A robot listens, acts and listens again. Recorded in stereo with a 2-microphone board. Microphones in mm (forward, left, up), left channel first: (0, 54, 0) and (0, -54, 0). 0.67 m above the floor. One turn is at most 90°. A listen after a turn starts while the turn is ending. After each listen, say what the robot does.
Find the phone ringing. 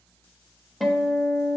Keep listening.
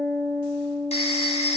Turn 70° left.
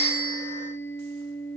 Keep listening.
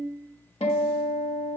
Keep listening.
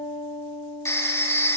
Turn 25° left.
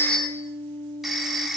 Found it: a phone ringing, straight ahead, under 1 m away.